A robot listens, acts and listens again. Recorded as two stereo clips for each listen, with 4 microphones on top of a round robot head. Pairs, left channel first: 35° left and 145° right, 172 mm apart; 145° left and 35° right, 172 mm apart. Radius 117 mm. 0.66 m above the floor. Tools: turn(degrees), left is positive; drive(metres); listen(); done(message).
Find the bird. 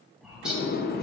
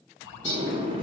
turn(degrees=130)
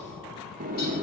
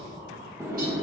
listen()
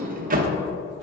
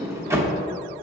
listen()
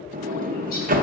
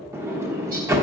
done("I heard a bird from this way, but can't make it out now.")